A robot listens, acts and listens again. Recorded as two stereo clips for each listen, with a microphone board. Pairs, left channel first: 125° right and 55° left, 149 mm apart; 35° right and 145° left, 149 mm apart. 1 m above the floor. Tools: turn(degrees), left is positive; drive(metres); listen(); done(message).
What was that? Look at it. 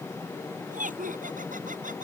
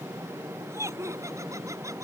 turn(degrees=75)
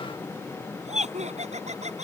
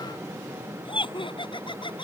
turn(degrees=20)
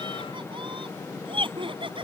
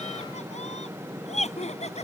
done("Facing the laughter.")